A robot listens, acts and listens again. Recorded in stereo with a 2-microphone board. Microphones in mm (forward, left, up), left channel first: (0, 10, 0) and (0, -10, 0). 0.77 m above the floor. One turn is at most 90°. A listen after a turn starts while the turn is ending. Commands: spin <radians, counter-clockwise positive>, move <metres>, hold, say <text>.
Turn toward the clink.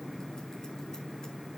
hold
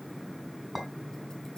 spin 0.52
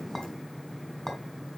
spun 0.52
spin 1.57
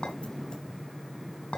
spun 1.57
spin 1.40
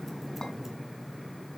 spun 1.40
hold
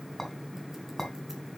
spin 0.26
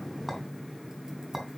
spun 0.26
say Found it: a clink, straight ahead, 2 to 4 m away.